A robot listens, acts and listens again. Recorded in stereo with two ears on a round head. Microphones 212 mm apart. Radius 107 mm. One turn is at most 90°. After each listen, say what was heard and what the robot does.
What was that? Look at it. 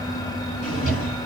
The drawer: about 30° left or 150° left. Turn 30° left.
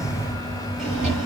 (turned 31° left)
Facing the drawer, 1 to 2 m away.